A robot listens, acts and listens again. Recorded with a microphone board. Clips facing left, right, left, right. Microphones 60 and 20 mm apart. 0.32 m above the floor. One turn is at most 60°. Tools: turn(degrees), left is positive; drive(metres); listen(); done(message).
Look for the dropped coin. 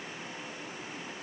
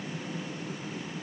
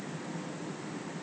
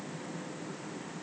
listen()
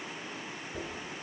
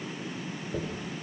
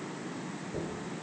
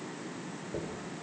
turn(degrees=-50)
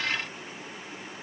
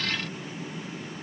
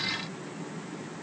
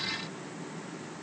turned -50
listen()
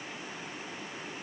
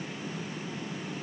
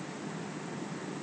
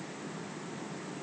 done("I heard a dropped coin, but can't make it out now. It was about straight ahead or 80° right.")